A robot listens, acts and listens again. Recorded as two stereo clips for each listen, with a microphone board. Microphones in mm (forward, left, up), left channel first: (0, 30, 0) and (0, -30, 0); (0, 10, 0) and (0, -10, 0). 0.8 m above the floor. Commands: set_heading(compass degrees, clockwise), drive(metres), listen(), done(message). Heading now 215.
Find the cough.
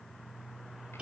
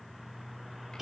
listen()
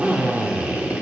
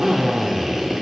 listen()
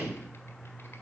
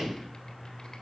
done("I can't make out a cough, only a drill.")